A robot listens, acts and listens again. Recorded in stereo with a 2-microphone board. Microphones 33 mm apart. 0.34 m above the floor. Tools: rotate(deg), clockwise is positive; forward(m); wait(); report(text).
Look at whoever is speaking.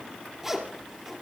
wait()
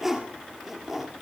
wait()
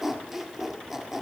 report("I can't make out anyone speaking, only a zipper.")